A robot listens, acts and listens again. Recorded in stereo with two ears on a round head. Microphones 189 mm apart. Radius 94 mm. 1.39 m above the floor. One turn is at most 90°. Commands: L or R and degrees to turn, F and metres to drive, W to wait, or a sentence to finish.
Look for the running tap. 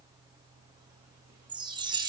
W
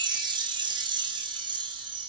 W
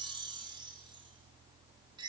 I can't make out a running tap to turn to.